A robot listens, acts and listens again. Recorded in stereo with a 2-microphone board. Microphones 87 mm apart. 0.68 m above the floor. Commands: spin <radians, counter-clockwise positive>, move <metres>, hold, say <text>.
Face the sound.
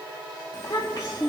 spin 0.70
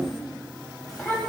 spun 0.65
say Found it: a child speaking, straight ahead, 2 to 4 m away.